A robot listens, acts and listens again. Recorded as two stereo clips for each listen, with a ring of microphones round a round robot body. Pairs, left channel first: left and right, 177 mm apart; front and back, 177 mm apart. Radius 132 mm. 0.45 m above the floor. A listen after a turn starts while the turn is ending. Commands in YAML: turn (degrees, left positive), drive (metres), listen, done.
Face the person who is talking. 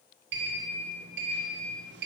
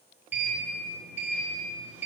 listen: true
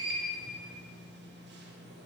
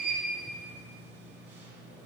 listen: true
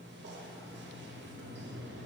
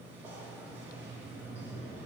done: "I can't make out anyone speaking, only a sliding door."